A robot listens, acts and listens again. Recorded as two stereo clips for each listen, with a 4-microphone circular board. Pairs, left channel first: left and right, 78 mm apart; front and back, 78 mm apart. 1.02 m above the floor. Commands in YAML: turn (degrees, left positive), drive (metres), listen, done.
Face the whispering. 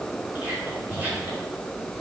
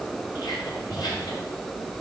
turn: -25
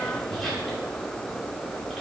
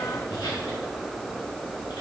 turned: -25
done: "Facing the whispering, 2 to 4 m away."